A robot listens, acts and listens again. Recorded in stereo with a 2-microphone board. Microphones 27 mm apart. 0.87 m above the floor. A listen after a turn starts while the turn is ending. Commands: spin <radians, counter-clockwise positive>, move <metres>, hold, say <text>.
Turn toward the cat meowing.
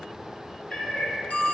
spin 0.96
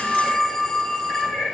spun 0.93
spin 1.22
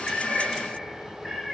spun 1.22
say Facing the cat meowing, over 4 m away.